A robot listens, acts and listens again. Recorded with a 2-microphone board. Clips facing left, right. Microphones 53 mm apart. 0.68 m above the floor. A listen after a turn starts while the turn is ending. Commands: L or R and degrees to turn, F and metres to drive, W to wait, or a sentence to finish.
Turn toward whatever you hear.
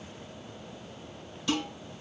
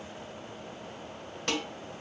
R55
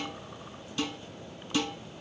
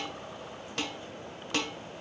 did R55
R70
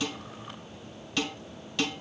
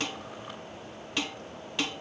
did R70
R20
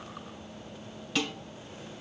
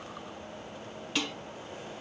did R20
Facing the dishes clattering, 1 to 2 m away.